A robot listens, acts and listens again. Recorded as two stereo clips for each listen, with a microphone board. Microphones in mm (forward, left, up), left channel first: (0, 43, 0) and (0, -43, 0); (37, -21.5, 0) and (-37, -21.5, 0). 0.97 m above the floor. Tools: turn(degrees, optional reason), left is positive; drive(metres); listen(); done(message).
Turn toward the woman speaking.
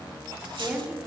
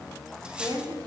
turn(degrees=-170, reason="The woman speaking: 170° right.")
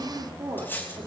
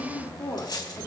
turn(degrees=-50, reason="The woman speaking is now 50° right.")
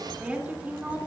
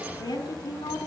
turn(degrees=-20, reason="The woman speaking is now 20° right.")
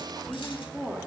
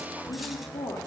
done("Facing the woman speaking.")